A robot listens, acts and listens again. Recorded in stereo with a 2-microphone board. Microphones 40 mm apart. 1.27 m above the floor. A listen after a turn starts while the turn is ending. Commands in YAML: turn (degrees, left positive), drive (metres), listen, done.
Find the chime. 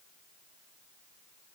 listen: true
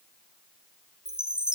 turn: -20
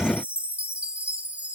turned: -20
turn: -140
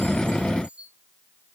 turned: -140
turn: -35
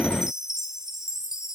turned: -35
turn: -15
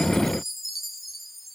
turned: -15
done: "Found it: a chime, straight ahead."